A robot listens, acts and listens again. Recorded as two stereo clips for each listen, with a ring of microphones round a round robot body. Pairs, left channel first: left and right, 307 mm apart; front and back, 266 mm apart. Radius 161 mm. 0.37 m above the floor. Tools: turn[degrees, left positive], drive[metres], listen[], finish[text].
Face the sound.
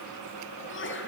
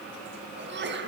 Thought: The sneeze: 140° left.
Action: turn[140]
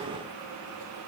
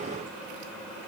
Action: finish[Facing where the sneeze came from. I can't hear it now.]